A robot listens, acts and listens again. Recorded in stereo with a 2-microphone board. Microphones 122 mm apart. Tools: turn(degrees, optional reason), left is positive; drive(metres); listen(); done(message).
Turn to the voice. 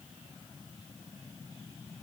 listen()
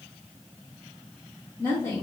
turn(degrees=20, reason="The woman speaking: about 20° left or 160° left.")
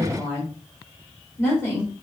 turn(degrees=20, reason="The woman speaking: about 20° left or 160° left.")
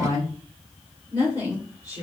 turn(degrees=30, reason="The woman speaking: about 30° left or 150° left.")
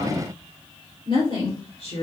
turn(degrees=120, reason="So it is at 120° left.")
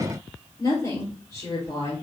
turn(degrees=30, reason="The woman speaking is now 30° left.")
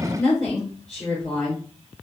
done("Found it: a woman speaking, straight ahead.")